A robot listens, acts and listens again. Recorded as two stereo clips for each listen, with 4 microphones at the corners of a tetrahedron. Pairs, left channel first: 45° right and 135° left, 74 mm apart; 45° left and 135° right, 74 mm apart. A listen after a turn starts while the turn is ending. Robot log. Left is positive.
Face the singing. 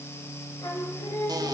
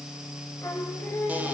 note: The singing: 15° right.
cmd yaw -15
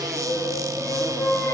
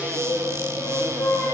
end: Facing the singing.